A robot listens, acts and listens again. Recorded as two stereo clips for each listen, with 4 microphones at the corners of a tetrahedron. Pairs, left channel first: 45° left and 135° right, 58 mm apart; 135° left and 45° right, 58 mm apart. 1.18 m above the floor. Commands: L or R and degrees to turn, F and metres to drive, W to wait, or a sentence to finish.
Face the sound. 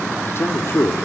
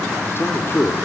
L85
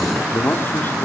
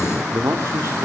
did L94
R10
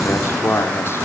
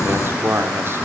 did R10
Facing the man speaking, 2 to 4 m away.